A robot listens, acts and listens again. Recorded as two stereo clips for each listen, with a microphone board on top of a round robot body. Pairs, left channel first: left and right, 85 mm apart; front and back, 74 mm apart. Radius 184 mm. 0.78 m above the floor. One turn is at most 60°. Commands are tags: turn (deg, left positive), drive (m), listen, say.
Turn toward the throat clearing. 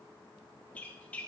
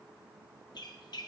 <listen/>
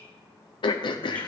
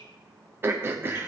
<turn deg="60"/>
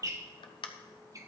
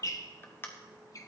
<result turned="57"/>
<turn deg="60"/>
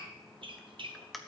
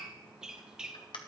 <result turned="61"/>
<say>Found it: throat clearing, straight ahead, under 1 m away.</say>